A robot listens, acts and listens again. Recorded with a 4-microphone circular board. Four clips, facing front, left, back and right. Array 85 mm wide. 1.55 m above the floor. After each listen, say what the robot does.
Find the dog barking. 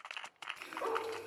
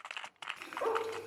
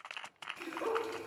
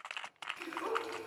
Turn 95° left.
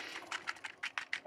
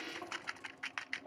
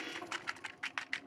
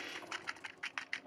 Keep listening.
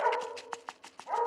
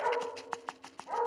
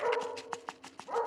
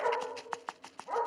Turn 15° left.
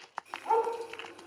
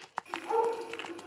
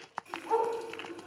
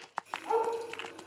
Facing the dog barking, over 4 m away.